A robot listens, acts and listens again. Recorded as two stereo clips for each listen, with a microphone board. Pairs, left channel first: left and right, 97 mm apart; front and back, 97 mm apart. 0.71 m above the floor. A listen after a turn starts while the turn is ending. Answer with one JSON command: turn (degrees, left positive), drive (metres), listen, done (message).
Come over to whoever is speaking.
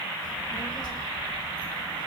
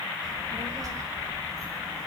{"turn": 130}
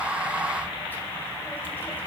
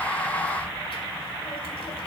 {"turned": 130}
{"turn": 20}
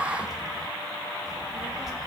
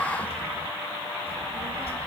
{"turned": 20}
{"drive": 1.0}
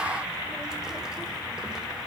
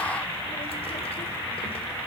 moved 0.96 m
{"listen": true}
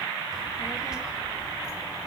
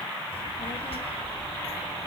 {"turn": -10}
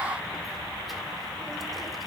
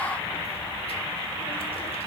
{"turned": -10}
{"drive": 1.0}
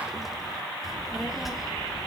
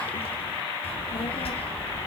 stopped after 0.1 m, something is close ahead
{"done": "Arrived at the child speaking, straight ahead."}